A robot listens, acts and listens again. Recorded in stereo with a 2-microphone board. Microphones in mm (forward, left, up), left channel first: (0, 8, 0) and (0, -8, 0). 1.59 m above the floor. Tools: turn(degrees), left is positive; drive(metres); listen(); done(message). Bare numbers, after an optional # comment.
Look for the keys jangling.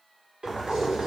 # The keys jangling: about 70° right or 110° right.
turn(-70)
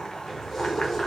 # So it is at 15° left.
turn(15)
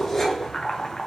# The keys jangling is now 20° left.
turn(20)
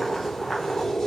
# The keys jangling is now 30° left.
turn(30)
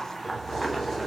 # The keys jangling is now 10° left.
turn(10)
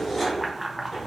done("Facing the keys jangling, 2 to 4 m away.")